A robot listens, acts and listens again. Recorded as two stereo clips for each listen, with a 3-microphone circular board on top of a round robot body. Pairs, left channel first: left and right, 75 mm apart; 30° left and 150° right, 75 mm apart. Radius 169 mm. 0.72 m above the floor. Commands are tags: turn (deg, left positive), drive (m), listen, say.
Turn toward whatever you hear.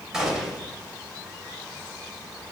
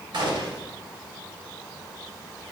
<turn deg="-170"/>
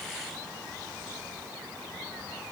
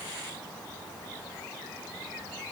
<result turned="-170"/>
<say>I heard a gunshot from this way, but can't make it out now.</say>